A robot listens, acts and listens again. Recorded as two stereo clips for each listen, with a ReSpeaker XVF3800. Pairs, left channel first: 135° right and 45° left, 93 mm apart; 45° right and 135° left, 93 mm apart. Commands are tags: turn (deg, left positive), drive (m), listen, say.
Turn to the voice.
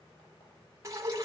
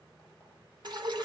<listen/>
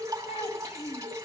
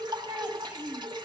<turn deg="-160"/>
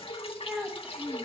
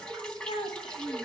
<turn deg="-40"/>
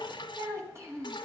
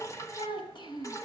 <turn deg="-15"/>
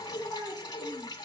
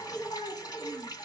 <turn deg="-10"/>
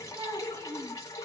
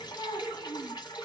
<say>Facing the child speaking.</say>